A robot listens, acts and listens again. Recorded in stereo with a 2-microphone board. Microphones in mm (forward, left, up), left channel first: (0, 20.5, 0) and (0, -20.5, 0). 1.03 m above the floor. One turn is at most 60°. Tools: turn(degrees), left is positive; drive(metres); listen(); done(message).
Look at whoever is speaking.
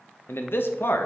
turn(degrees=60)
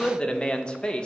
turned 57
turn(degrees=25)
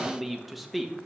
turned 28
done("Facing the man speaking.")